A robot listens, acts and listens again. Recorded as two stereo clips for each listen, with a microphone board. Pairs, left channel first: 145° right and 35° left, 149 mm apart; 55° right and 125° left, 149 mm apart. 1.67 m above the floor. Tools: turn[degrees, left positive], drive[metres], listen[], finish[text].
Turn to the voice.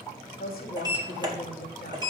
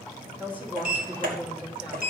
Thought: The woman speaking: 155° right.
Action: turn[-155]
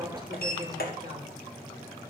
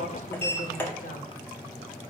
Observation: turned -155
Thought: The woman speaking is now 25° right.
Action: turn[-25]
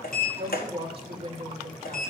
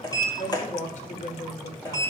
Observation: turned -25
Thought: The woman speaking is now 15° right.
Action: turn[-15]
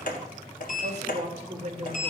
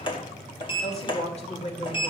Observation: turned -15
Thought: The woman speaking is now 10° right.
Action: turn[-10]
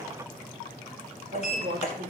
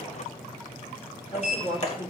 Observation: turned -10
Action: finish[Facing the woman speaking.]